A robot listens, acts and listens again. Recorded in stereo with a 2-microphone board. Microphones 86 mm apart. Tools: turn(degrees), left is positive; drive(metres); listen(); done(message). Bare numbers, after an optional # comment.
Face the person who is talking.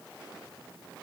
listen()
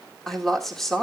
turn(30)
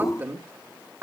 # So it is at 25° right.
turn(-25)
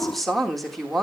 done("Facing the woman speaking, 2 to 4 m away.")